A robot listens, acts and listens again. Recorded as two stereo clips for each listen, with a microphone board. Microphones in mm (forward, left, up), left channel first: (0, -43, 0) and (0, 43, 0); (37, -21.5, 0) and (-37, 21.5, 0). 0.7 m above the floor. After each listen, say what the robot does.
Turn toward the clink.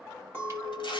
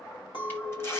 Turn 25° right.
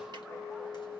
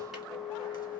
Found it: a clink, straight ahead.